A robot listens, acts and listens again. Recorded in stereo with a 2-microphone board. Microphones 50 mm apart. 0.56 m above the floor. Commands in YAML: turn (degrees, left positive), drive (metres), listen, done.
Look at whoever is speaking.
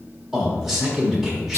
turn: -30
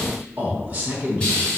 turn: -145
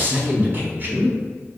turn: -45
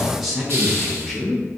done: "Facing the man speaking, 1 to 2 m away."